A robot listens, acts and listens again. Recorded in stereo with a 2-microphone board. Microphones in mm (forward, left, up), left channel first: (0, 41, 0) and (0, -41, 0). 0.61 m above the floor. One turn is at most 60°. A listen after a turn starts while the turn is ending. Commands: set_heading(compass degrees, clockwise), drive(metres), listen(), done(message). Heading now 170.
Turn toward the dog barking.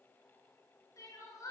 listen()
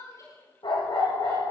set_heading(110)
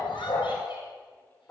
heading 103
set_heading(73)
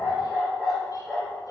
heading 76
done("Found it: a dog barking, straight ahead.")